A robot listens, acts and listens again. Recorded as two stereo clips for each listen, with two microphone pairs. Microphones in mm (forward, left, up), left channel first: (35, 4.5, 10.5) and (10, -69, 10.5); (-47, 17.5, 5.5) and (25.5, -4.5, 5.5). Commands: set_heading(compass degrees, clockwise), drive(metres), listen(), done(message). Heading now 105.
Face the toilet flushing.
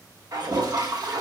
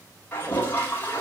set_heading(240)
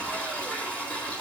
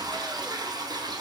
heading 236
done("Facing the toilet flushing.")